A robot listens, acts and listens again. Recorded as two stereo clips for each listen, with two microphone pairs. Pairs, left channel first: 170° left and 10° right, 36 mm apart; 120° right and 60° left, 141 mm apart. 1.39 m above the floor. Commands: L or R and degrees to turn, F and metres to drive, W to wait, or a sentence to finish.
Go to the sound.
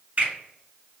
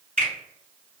L35
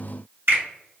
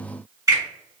R10
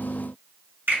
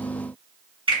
F1.0
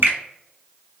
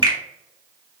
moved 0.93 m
F1.0
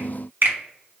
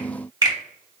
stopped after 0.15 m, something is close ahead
Arrived at the finger snap, straight ahead.